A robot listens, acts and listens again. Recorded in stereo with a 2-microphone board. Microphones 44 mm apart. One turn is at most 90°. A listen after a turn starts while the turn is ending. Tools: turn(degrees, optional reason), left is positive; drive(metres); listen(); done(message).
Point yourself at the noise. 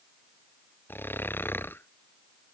turn(degrees=50, reason="The snoring: about 50° left or 130° left.")
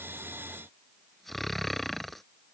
done("Found it: snoring, straight ahead.")